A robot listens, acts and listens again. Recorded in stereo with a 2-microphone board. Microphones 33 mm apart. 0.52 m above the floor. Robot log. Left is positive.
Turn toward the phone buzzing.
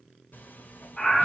cmd idle
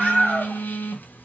note: The phone buzzing: about 70° left or 110° left.
cmd yaw +70
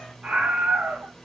cmd idle
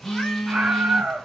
end: Found it: a phone buzzing, straight ahead.